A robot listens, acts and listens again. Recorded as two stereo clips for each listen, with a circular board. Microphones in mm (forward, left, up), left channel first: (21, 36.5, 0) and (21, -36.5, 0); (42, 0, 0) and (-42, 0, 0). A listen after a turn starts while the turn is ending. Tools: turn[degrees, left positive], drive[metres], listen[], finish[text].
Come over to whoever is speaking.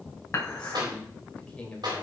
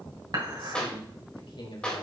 Thought: The man speaking: 15° left.
Action: turn[15]
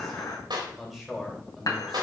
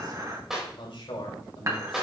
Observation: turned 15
Action: drive[1.0]
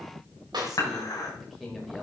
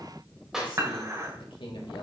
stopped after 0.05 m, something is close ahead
Action: finish[Blocked. The man speaking is further on, straight ahead.]